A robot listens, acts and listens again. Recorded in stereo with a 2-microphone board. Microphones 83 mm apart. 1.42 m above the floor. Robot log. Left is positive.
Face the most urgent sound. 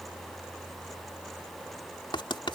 cmd idle
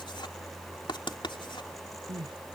note: The crying: about 70° right or 110° right.
cmd yaw -70
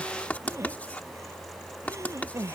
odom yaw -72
note: So it is at 35° right.
cmd yaw -35
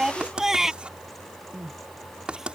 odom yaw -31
end: Found it: crying, straight ahead.